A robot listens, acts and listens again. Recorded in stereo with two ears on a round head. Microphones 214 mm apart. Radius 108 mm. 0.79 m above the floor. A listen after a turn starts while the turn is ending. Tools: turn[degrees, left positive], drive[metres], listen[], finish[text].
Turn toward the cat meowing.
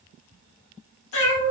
Thought: The cat meowing: about 60° left or 120° left.
Action: turn[60]
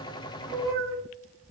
Action: finish[Facing the cat meowing, under 1 m away.]